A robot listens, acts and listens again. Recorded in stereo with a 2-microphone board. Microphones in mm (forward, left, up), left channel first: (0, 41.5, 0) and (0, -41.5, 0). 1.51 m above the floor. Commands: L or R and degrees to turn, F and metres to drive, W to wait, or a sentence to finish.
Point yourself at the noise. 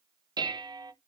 R55
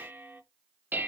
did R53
R25
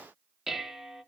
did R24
Found it: dishes clattering, straight ahead.